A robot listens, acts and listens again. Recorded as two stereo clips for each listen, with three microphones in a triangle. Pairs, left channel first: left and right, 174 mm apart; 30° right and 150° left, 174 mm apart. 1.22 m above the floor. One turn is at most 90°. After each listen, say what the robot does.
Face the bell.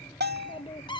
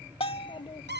Turn 85° right.
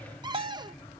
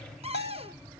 Turn 30° right.
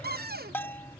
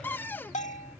Turn 10° left.
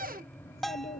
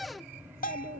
Found it: a bell, straight ahead.